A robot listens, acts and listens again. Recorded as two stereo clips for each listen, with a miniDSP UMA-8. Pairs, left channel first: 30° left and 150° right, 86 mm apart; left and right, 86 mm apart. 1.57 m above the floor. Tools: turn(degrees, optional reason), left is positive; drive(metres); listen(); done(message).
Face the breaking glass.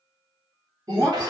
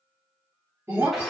turn(degrees=-145, reason="The breaking glass: 145° right.")
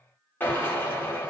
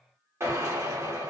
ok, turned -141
done("I heard breaking glass from this way, but can't make it out now.")